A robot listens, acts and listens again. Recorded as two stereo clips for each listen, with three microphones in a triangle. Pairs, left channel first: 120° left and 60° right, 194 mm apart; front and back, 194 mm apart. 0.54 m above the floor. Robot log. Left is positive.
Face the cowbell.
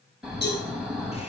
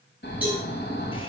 note: The cowbell: 100° left.
cmd yaw +100
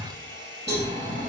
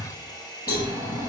note: The cowbell is now 35° right.
cmd yaw -35
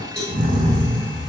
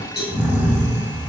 note: The cowbell is now 30° right.
cmd yaw -30
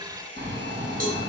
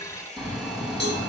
note: The cowbell is now 20° right.
cmd yaw -20
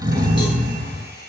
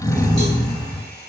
cmd idle
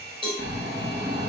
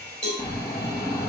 end: Found it: a cowbell, straight ahead, over 4 m away.